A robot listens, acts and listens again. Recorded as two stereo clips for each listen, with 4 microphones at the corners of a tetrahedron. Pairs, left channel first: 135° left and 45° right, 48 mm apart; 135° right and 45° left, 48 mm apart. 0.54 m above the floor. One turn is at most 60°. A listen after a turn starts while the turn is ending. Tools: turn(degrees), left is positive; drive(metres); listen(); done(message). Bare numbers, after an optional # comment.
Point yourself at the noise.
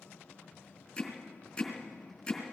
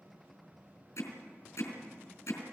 # The hammering: 150° right.
turn(-60)
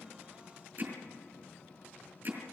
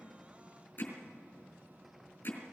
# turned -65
# The hammering is now 85° right.
turn(-60)
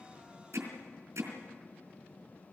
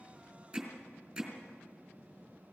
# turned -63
# The hammering is now 20° right.
turn(-20)
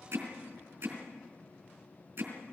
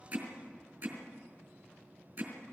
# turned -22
done("Facing the hammering.")